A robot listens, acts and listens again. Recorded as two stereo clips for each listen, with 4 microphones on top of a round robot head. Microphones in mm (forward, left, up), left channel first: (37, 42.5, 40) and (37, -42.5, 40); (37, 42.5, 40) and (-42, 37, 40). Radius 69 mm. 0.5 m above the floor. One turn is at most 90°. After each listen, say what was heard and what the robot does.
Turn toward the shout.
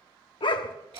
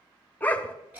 Keep listening.
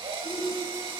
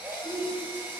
The shout: 170° left. Turn 90° left.
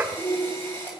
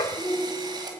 The shout is now 75° left. Turn 75° left.
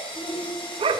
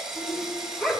The shout is now 15° left. Turn 15° left.
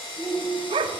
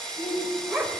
Found it: a shout, straight ahead.